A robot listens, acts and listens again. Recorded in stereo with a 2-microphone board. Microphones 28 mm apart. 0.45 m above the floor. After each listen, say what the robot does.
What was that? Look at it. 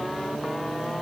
Keep listening.
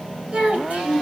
Turn 50° right.
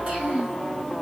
Turn 50° right.
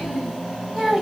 Turn 20° right.
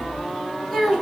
Facing the child speaking, 2 to 4 m away.